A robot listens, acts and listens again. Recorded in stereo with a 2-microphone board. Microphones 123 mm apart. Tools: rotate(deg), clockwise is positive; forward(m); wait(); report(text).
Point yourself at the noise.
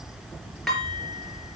rotate(-30)
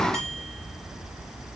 wait()
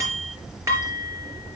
rotate(25)
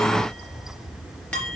rotate(-10)
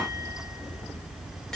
wait()
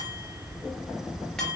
wait()
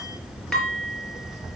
report("Found it: dishes clattering, straight ahead, over 4 m away.")